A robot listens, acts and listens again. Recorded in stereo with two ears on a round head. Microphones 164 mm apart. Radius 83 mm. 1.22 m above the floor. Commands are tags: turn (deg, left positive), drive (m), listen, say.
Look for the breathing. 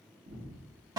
<turn deg="-55"/>
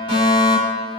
<listen/>
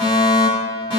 <listen/>
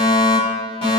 <say>I heard breathing, but can't make it out now. It was about straight ahead or 70° right.</say>